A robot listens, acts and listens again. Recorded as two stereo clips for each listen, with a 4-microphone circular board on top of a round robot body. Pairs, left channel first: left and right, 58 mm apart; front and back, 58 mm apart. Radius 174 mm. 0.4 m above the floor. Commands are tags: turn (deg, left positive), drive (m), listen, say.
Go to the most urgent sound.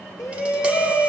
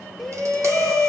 <turn deg="85"/>
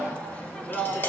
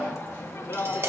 <turn deg="25"/>
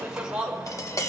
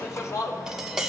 <turn deg="-15"/>
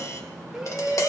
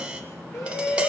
<drive m="1.0"/>
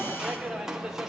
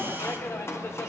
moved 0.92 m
<turn deg="-10"/>
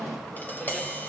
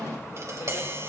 <listen/>
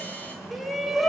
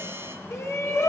<drive m="1.0"/>
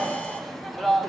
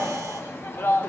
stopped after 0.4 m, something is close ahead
<say>Arrived at the shout, straight ahead.</say>